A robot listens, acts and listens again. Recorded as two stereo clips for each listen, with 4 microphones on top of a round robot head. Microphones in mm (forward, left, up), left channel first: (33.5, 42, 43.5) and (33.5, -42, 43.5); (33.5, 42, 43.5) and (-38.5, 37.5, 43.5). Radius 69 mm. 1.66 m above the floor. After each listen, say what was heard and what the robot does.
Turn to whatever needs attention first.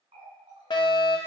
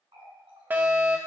The fire alarm: 120° left. Turn 120° left.
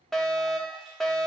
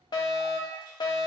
Found it: a fire alarm, straight ahead.